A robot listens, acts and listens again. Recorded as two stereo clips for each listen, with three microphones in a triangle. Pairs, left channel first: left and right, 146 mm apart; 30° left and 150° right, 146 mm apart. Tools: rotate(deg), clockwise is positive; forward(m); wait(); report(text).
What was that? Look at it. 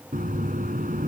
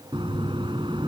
rotate(100)
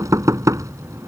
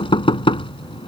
rotate(25)
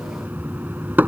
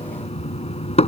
rotate(15)
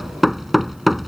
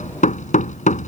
report("Found it: knocking, straight ahead.")